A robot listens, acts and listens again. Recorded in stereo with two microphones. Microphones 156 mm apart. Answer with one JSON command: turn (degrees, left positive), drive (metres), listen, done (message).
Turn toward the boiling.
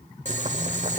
{"turn": -50}
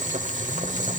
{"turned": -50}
{"turn": -65}
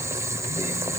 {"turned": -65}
{"turn": -20}
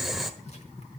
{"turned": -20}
{"done": "Facing the boiling."}